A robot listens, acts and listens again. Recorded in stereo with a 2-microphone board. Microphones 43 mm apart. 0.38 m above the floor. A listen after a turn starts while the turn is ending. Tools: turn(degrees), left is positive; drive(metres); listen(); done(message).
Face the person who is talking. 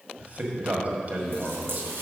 turn(degrees=-40)
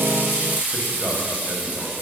listen()
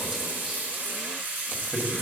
turn(degrees=-10)
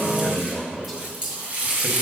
done("Found it: a man speaking, straight ahead, 1 to 2 m away.")